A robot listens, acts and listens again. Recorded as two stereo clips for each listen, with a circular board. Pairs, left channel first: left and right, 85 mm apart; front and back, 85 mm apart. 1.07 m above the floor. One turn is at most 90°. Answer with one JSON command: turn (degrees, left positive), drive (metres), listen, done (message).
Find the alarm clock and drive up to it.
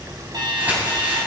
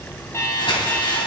{"turn": -55}
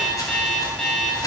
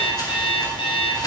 {"drive": 1.0}
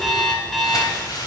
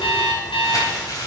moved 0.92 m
{"drive": 1.0}
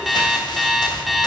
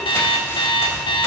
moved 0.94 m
{"drive": 1.0}
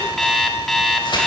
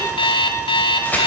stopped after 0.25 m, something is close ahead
{"done": "I am next to the alarm clock."}